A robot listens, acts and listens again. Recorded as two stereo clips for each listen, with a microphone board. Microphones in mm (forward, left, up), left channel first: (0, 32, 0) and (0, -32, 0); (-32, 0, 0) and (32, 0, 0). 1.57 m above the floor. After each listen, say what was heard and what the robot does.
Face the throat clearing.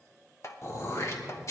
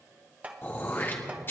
The throat clearing: 125° left. Turn 125° left.
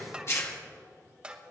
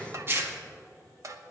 The throat clearing is now 50° left. Turn 50° left.
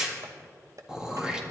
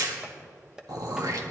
The throat clearing is now 10° right. Turn 10° right.
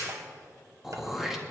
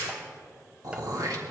Facing the throat clearing, 1 to 2 m away.